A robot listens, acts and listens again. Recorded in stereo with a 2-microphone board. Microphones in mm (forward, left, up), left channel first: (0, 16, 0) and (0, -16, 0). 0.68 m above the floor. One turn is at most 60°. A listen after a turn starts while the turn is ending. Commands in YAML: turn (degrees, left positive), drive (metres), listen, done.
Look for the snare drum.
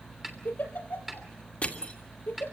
turn: -30
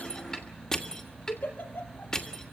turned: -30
listen: true
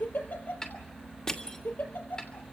turn: 20
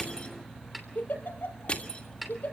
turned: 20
done: "Facing the snare drum."